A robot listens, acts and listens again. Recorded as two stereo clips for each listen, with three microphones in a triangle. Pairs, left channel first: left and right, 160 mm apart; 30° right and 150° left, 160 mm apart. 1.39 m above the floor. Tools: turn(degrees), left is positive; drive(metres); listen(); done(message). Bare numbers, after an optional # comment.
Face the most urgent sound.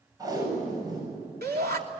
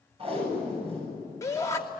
# The shout: 100° right.
turn(-100)
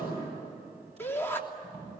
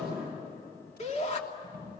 # The shout is now 15° left.
turn(15)
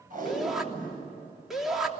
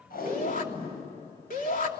done("Facing the shout.")